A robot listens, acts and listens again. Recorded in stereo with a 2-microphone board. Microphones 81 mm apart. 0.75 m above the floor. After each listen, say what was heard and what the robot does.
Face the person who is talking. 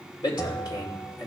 The man speaking: about 70° left or 110° left. Turn 70° left.
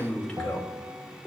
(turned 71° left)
So it is at 10° left. Turn 10° left.
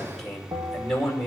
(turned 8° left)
Found it: a man speaking, straight ahead, 2 to 4 m away.